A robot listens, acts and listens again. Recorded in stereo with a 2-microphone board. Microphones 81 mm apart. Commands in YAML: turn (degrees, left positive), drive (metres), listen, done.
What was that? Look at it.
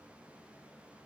listen: true
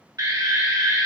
turn: -50
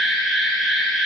done: "Facing the alarm."